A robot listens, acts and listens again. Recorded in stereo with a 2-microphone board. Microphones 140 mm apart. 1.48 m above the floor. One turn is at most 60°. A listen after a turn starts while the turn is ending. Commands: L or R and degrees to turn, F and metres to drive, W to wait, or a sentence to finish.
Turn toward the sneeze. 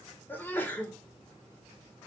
L30
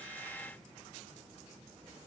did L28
W
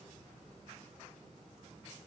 I heard a sneeze, but can't make it out now. It was about 15° right or 140° left.